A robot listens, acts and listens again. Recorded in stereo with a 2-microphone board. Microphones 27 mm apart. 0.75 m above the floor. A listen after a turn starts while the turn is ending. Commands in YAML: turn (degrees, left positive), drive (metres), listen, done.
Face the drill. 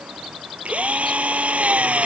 turn: -50
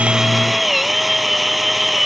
done: "Found it: a drill, straight ahead."